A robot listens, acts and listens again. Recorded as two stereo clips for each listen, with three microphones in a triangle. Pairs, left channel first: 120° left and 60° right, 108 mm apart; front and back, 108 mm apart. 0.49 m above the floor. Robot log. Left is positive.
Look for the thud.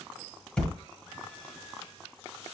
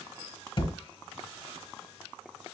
note: The thud: 35° left.
cmd yaw +35
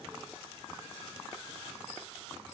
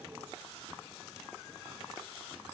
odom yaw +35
end: Facing where the thud came from. I can't hear it now.